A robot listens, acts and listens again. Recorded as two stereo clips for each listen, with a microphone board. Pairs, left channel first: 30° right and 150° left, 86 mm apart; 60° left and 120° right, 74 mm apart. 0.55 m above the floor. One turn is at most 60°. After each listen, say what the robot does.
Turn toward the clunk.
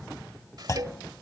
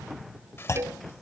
Turn 15° left.
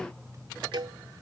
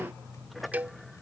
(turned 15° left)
Facing where the clunk came from. I can't hear it now.